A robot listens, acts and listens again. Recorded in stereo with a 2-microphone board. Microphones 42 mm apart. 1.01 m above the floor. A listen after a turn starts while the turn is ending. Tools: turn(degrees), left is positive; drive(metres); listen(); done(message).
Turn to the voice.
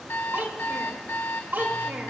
turn(degrees=-60)
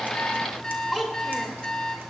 done("Found it: a child speaking, straight ahead, 2 to 4 m away.")